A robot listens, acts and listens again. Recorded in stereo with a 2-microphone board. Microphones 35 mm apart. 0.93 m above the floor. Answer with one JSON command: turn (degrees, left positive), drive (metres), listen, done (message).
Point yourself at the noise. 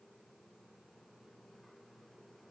{"listen": true}
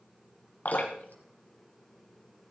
{"turn": 60}
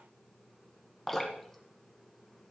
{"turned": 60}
{"turn": 10}
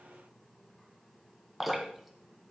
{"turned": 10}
{"done": "Facing the dripping, 1 to 2 m away."}